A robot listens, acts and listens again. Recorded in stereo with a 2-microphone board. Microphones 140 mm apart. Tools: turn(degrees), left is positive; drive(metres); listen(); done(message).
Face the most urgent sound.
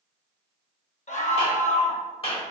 turn(degrees=55)
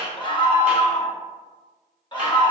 turn(degrees=40)
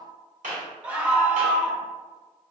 turn(degrees=-10)
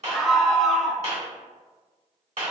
done("Found it: a scream, straight ahead, 1 to 2 m away.")